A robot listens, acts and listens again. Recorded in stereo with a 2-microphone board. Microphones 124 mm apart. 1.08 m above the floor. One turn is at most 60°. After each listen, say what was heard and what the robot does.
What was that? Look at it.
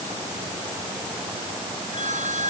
Turn 60° right.
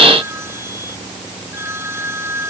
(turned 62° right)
So it is at 20° right. Turn 20° right.
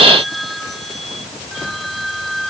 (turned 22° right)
Facing the phone ringing.